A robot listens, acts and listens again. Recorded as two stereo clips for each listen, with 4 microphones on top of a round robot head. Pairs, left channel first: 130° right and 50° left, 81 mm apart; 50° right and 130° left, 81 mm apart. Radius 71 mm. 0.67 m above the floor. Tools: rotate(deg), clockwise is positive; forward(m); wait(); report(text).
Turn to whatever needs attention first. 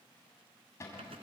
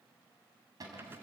wait()
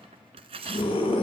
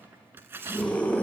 rotate(125)
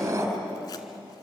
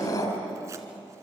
report("Facing the scream, over 4 m away.")